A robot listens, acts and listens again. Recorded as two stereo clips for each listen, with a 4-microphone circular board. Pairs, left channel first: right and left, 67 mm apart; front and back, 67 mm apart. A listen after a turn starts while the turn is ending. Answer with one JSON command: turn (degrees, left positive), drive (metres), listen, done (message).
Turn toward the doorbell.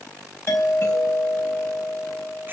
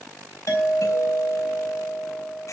{"turn": -40}
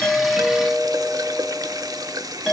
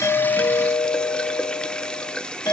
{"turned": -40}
{"done": "Found it: a doorbell, straight ahead, over 4 m away."}